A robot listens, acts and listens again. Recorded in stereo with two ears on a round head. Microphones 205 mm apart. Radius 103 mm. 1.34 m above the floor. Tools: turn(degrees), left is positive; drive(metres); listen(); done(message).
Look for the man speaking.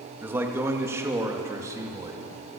turn(degrees=-30)
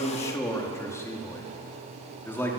turn(degrees=10)
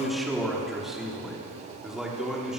done("Found it: a man speaking, straight ahead.")